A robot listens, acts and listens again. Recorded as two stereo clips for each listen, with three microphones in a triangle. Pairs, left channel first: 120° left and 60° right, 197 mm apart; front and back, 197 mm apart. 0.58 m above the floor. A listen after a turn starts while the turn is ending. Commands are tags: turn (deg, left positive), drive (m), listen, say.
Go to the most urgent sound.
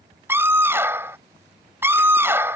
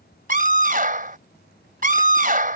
<turn deg="-140"/>
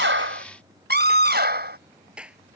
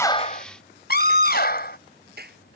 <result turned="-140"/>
<turn deg="-30"/>
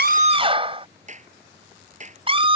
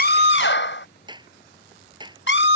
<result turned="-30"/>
<drive m="1.0"/>
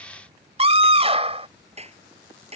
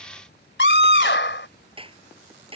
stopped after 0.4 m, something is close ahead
<say>Something is in my way. I am facing the scream but have not reached it.</say>